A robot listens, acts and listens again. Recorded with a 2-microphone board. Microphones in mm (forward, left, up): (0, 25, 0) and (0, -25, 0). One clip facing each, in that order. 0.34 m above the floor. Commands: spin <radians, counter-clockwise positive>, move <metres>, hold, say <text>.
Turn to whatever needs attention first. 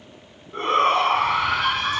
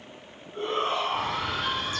spin 1.22
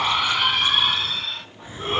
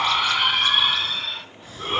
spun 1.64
say Found it: a shout, straight ahead, 2 to 4 m away.